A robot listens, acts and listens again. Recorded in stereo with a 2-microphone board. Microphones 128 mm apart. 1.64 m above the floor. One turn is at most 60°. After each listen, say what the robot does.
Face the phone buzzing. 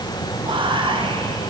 Keep listening.
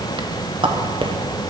Keep listening.
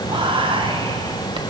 I can't make out a phone buzzing to turn to.